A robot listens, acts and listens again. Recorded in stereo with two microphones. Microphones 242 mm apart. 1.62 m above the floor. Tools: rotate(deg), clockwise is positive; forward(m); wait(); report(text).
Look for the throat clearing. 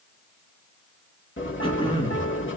rotate(-20)
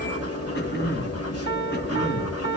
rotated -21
rotate(-135)
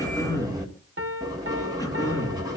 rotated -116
rotate(-15)
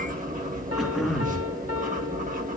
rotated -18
report("Facing the throat clearing.")